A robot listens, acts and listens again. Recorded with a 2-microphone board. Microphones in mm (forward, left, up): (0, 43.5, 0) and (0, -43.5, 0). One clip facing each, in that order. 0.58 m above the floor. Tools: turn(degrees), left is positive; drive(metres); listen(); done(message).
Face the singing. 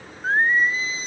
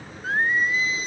turn(degrees=30)
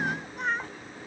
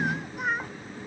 done("Found it: singing, straight ahead.")